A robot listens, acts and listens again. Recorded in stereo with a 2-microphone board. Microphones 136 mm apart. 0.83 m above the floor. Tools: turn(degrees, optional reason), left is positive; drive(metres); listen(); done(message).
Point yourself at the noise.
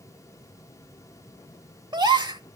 turn(degrees=-30, reason="The gasp: about 30° right or 150° right.")
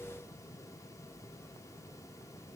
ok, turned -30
listen()
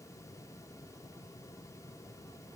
done("I heard a gasp, but can't make it out now. It was about straight ahead or 120° right.")